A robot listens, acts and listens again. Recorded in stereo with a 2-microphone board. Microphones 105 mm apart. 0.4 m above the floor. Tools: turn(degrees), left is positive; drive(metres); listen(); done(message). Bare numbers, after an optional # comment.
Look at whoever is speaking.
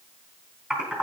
listen()
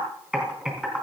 listen()
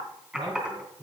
# The man speaking: about 55° right or 125° right.
turn(-55)
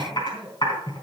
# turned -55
done("Found it: a man speaking, straight ahead, 2 to 4 m away.")